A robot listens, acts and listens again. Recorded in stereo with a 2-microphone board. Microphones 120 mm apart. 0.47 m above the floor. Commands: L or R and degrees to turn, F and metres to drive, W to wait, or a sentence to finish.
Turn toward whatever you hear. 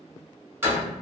R20
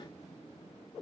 W
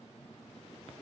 I heard a door slam, but can't make it out now. It was about straight ahead or 140° right.